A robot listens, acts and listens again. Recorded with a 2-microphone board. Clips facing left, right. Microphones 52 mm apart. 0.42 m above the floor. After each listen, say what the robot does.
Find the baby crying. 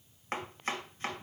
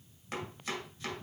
Keep listening.
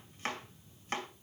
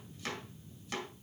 Keep listening.
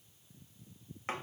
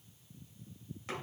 I can't make out a baby crying to turn to.